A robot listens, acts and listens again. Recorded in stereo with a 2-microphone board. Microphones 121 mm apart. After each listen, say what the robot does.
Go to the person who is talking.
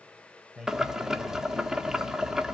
Turn 30° right.
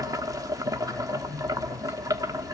Keep listening.
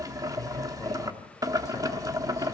Keep listening.
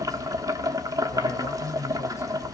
I heard a man speaking, but can't make it out now. It was about 25° left or 145° right. I did not reach it.